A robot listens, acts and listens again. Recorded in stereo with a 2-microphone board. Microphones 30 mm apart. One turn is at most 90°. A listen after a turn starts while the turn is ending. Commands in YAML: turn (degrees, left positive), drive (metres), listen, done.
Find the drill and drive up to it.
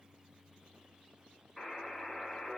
listen: true
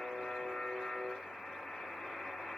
listen: true
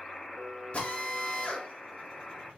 turn: 40
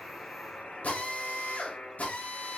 turn: 90
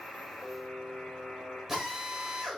drive: 1.0
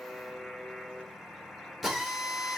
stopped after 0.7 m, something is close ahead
done: "I am next to the drill."